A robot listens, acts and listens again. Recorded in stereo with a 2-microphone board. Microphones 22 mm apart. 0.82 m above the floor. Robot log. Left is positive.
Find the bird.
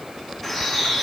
cmd yaw +30
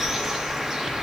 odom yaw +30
note: So it is at 20° right.
cmd yaw -20
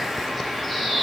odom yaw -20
end: Facing the bird.